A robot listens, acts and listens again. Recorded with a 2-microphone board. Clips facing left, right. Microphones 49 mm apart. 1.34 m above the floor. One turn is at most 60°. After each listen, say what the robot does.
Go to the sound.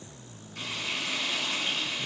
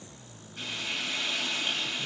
Turn 60° left.
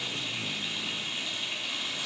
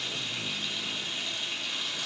Turn 20° left.
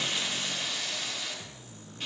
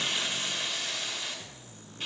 Drive 1.0 m forward.
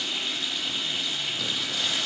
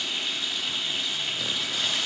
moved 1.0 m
Drive 1.0 m forward.
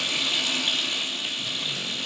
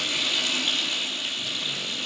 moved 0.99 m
Turn 10° left.
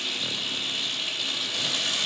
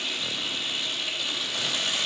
Drive 1.0 m forward.
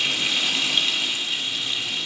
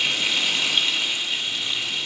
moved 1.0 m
Drive 1.0 m forward.
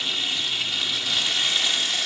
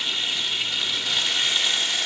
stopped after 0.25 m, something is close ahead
Arrived at the frying, straight ahead.